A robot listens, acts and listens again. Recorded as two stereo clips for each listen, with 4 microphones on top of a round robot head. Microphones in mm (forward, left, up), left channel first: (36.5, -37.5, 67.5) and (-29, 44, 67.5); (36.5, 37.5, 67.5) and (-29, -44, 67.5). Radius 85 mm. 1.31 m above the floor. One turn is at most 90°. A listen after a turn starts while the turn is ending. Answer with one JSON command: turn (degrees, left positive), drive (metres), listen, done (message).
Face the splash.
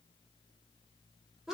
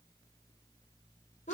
{"listen": true}
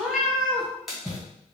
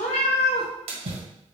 {"turn": -90}
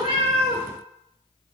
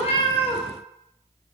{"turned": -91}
{"turn": -50}
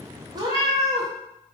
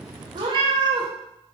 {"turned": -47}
{"done": "Facing where the splash came from. I can't hear it now."}